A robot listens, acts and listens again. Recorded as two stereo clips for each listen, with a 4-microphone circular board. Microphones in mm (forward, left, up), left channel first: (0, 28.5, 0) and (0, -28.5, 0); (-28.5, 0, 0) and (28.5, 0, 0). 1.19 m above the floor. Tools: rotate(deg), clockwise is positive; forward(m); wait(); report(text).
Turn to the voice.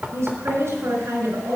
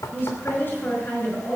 rotate(125)
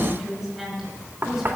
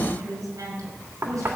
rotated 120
report("Facing the woman speaking.")